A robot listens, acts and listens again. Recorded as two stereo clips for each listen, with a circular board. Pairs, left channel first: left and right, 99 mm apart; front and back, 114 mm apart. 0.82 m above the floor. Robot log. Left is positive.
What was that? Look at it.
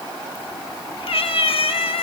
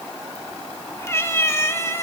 note: The cat meowing: 65° left.
cmd yaw +65
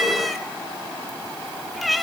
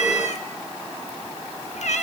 end: Found it: a cat meowing, straight ahead, under 1 m away.